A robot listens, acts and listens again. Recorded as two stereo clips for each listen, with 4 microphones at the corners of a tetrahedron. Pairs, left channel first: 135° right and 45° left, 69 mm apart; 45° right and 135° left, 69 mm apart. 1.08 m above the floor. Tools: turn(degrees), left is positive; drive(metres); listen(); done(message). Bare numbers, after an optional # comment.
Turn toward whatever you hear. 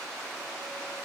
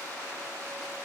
listen()
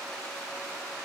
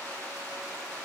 listen()
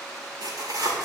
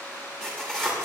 # The tearing paper: 35° left.
turn(35)
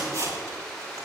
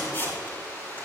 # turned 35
# The tearing paper is now 10° left.
turn(10)
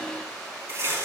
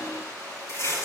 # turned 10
done("Facing the tearing paper, over 4 m away.")